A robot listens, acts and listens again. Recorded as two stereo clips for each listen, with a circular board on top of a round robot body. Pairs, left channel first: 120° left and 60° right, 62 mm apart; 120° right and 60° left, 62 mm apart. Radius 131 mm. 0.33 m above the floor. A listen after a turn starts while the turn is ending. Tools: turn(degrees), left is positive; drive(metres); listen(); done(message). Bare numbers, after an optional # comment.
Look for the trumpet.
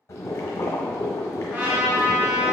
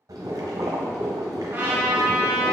done("Facing the trumpet, under 1 m away.")